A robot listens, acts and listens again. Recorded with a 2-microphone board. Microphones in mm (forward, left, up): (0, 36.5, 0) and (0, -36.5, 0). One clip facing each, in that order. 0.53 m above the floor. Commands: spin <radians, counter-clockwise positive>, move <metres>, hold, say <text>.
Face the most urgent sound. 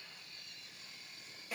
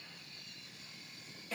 hold
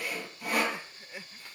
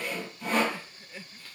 spin 0.35
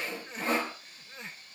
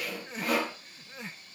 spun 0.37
say Found it: crying, straight ahead.